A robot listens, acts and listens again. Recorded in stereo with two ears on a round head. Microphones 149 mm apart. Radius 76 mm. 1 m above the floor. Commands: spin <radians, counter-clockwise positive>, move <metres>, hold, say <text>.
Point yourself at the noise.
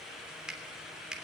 spin -0.52
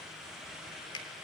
spin 0.44
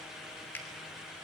spin 0.17
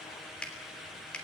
say Facing the finger snap.